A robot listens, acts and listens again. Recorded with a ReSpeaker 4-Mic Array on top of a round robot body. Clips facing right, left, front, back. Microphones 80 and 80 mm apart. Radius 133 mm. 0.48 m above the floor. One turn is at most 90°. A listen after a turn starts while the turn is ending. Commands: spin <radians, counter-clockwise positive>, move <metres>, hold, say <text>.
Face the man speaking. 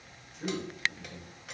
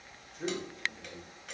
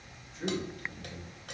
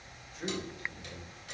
spin 1.57
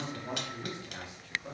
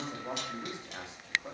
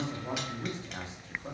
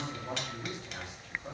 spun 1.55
spin 0.87
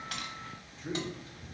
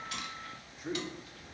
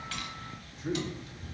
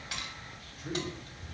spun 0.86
spin 0.61
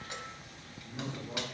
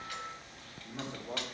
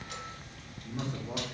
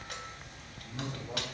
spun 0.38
spin 0.87
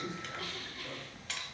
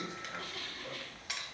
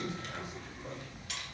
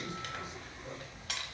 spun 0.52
spin 0.44
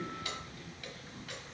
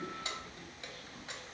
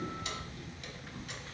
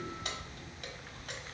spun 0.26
spin 0.17
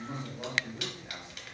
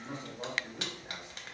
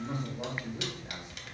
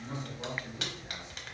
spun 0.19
say Found it: a man speaking, straight ahead.